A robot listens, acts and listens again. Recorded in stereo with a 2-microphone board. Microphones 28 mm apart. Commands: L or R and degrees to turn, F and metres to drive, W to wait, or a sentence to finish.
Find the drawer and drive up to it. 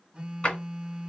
L40
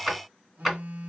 F1.0
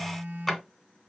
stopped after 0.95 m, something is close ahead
L10
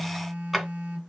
I am next to the drawer.